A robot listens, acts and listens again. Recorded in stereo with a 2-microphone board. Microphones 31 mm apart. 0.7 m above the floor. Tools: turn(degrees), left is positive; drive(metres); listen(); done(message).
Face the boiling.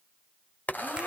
turn(degrees=60)
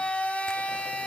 listen()
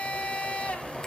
done("Facing the boiling.")